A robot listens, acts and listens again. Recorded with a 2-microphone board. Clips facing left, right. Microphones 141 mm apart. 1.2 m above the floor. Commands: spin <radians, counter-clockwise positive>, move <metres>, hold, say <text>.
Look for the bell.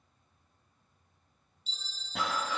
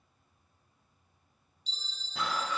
spin 0.52
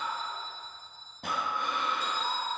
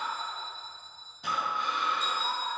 spin -0.52
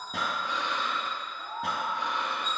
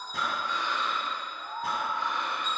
hold
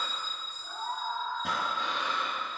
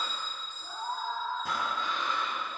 say Facing the bell, 1 to 2 m away.